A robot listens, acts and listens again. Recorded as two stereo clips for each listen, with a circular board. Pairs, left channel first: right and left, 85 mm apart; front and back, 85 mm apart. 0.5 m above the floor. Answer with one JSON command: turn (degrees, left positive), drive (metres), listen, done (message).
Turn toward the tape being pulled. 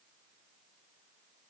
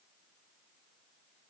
{"listen": true}
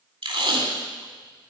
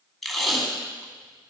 {"turn": 90}
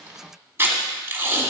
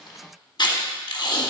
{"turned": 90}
{"turn": 30}
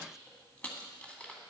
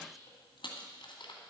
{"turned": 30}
{"listen": true}
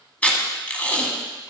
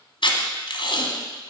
{"turn": -15}
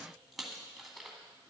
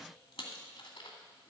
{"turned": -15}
{"listen": true}
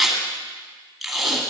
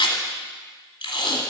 {"done": "Facing the tape being pulled."}